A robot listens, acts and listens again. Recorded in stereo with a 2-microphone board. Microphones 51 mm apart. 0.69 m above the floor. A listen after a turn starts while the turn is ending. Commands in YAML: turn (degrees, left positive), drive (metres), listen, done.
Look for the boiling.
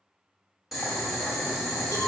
turn: -30
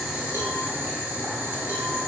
turn: -145
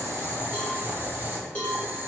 turn: -45
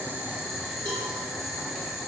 done: "Found it: boiling, straight ahead."